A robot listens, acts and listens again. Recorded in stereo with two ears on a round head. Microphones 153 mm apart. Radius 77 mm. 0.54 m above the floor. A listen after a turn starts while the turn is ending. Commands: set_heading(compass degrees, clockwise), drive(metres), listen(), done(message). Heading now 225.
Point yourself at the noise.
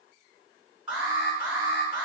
set_heading(255)
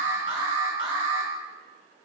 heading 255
set_heading(40)
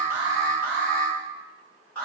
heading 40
set_heading(30)
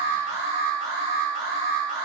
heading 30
done("Facing the alarm.")